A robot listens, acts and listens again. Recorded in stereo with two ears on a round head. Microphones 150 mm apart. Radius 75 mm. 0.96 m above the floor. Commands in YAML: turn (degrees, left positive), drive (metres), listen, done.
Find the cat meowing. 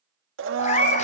turn: 45
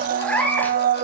turn: 10
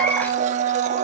listen: true
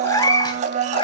turn: 30
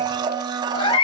turn: 30
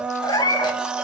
turn: 25
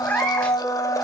turn: 10
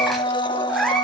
done: "Found it: a cat meowing, straight ahead."